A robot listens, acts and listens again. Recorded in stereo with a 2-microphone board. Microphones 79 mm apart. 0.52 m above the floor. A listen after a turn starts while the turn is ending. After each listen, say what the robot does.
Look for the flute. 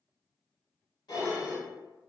Keep listening.
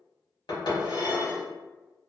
Keep listening.
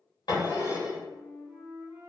Turn 30° right.
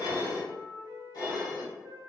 Turn 120° right.
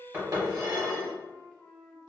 Turn 20° left.
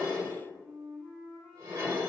Found it: a flute, straight ahead, under 1 m away.